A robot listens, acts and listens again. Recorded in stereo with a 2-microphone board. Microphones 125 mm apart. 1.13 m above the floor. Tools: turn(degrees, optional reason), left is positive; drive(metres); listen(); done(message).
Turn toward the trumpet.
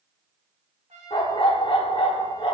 turn(degrees=-65, reason="The trumpet: about 65° right or 115° right.")
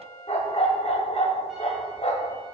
done("Found it: a trumpet, straight ahead, 2 to 4 m away.")